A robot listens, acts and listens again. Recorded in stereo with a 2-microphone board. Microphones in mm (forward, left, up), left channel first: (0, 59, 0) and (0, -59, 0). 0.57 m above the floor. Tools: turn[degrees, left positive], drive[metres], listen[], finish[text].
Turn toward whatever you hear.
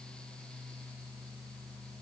Action: listen[]
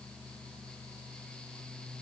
Action: listen[]
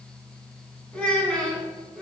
Action: turn[30]
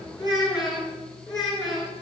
Thought: So it is at 145° left.
Action: turn[145]
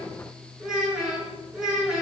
Action: finish[Found it: a child speaking, straight ahead, over 4 m away.]